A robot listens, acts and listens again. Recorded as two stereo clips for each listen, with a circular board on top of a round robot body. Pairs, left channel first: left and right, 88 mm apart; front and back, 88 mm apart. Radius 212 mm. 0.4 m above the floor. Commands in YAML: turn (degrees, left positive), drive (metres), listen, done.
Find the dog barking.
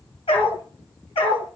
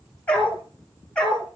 turn: 80
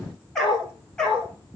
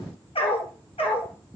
turn: 10
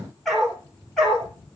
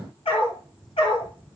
done: "Facing the dog barking."